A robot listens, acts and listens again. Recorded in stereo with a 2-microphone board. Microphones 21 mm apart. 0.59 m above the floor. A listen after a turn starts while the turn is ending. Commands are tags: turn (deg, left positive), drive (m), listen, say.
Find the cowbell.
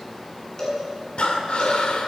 <turn deg="25"/>
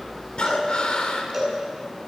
<say>Found it: a cowbell, straight ahead.</say>